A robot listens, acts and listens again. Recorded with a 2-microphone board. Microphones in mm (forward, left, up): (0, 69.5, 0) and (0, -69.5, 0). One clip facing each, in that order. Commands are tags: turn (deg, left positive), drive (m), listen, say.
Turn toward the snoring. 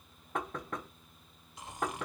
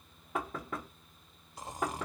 <turn deg="-35"/>
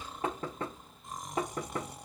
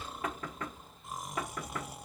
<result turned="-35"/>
<say>Found it: snoring, straight ahead, under 1 m away.</say>